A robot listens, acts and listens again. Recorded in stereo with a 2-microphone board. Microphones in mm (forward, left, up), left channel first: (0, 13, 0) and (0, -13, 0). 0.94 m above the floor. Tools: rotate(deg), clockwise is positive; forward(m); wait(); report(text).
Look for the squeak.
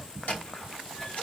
rotate(-65)
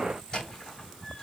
rotate(-45)
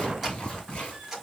report("Facing the squeak, 2 to 4 m away.")